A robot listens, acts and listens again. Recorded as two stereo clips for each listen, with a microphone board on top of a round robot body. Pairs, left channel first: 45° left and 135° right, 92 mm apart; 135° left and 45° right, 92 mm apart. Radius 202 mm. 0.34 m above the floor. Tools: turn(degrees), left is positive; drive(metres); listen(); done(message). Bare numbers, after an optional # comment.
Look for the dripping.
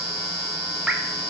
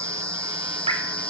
# The dripping: 50° right.
turn(-50)
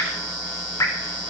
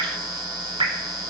# The dripping is now 10° right.
turn(-10)
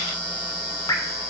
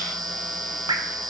done("Found it: dripping, straight ahead.")